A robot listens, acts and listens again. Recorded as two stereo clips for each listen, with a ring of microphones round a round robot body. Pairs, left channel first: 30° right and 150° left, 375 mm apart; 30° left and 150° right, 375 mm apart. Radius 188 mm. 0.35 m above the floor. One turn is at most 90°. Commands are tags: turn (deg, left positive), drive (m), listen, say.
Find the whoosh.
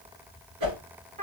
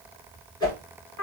<turn deg="90"/>
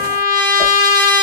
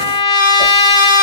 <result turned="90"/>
<turn deg="20"/>
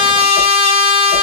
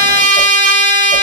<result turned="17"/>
<listen/>
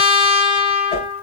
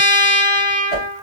<say>Facing the whoosh, 2 to 4 m away.</say>